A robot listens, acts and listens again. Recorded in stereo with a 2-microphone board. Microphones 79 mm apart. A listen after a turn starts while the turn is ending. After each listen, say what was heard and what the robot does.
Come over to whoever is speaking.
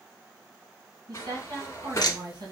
The woman speaking: about 70° right or 110° right. Turn 70° right.
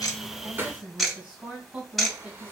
So it is at 20° right. Turn 20° right.
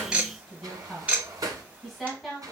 Drive 1.0 m forward.
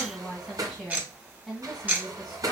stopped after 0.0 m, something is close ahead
Something is in my way. I am facing the woman speaking but have not reached it.